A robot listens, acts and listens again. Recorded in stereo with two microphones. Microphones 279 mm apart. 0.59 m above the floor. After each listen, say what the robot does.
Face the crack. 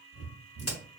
Turn 60° left.
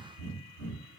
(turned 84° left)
Keep listening.
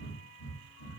I heard a crack, but can't make it out now. It was about 25° right or 35° left.